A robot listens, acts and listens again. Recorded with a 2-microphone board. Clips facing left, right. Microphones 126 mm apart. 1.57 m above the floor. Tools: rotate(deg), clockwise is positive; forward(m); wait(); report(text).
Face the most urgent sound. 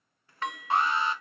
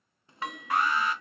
rotate(-25)
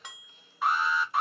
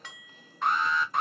report("Facing the alarm.")